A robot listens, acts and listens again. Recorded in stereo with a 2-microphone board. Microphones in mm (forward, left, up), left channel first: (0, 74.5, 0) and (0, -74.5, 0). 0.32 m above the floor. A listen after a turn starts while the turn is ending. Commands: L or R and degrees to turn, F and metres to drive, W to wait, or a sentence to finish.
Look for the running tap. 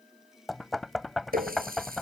R90
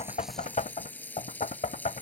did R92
L10
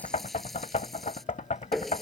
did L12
Facing the running tap.